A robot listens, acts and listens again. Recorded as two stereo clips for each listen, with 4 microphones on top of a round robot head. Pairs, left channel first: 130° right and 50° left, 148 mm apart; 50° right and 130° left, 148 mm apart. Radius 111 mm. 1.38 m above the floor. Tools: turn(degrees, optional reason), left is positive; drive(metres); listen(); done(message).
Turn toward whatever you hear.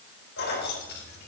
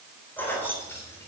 turn(degrees=-125, reason="The keys jangling: 125° right.")
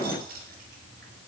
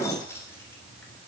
turn(degrees=25, reason="The keys jangling is now 25° left.")
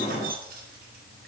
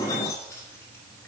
turn(degrees=25, reason="The keys jangling is now 25° left.")
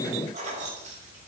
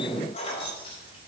turn(degrees=10, reason="The keys jangling is now 10° left.")
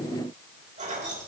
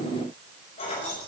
done("Found it: keys jangling, straight ahead.")